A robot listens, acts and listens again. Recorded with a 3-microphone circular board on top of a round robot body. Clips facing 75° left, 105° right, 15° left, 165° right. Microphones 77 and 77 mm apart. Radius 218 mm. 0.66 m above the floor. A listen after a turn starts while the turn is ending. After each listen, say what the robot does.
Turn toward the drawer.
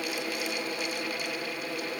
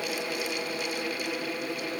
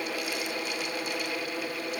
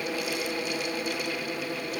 Keep listening.
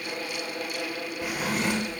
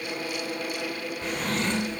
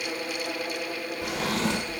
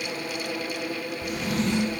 Found it: a drawer, straight ahead, 1 to 2 m away.